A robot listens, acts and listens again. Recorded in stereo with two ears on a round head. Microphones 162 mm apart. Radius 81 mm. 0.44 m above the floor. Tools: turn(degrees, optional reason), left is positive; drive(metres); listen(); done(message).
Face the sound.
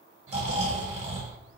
turn(degrees=-40, reason="The snoring: about 40° right or 140° right.")
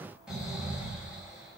done("Found it: snoring, straight ahead, 2 to 4 m away.")